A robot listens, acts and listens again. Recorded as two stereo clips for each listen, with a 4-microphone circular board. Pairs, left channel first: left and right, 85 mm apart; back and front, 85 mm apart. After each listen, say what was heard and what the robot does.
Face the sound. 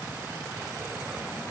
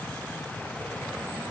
Keep listening.
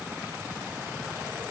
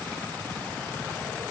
Keep listening.
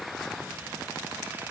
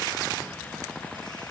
I can't make out anything to turn to.